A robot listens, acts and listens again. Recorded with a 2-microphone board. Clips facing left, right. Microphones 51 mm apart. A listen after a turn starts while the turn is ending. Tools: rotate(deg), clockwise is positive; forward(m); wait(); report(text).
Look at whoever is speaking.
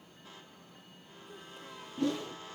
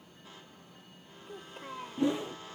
rotate(55)
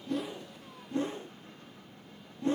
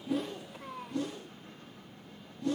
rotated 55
rotate(70)
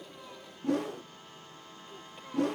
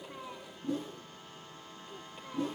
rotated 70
wait()
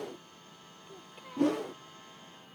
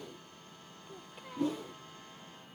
report("Found it: a child speaking, straight ahead.")